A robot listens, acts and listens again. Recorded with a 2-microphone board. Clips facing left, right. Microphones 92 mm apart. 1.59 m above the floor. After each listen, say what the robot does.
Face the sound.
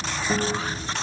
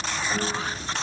Turn 60° left.
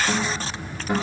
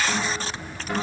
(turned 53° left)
Turn 10° left.
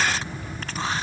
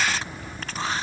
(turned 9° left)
Keep listening.
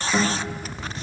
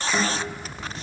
Facing the guitar, 2 to 4 m away.